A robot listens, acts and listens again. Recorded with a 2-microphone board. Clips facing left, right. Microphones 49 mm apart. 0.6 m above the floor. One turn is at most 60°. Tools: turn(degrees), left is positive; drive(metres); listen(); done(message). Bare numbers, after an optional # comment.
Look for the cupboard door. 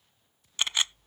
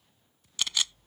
listen()
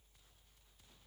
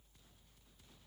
listen()
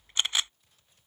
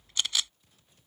done("I can't make out a cupboard door to turn to.")